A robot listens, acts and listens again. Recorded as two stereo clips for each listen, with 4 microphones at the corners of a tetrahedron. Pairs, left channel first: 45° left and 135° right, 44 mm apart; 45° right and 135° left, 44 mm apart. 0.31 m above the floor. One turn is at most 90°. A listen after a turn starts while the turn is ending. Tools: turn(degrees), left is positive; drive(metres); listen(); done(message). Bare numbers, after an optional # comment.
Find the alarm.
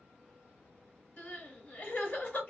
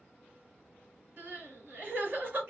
listen()
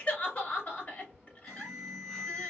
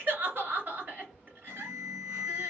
# The alarm: 130° left.
turn(90)
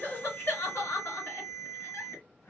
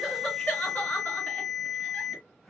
# The alarm is now 45° left.
turn(45)
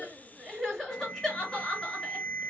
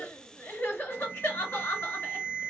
# The alarm is now 10° right.
turn(-10)
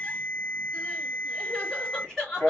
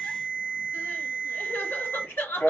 done("Facing the alarm, 1 to 2 m away.")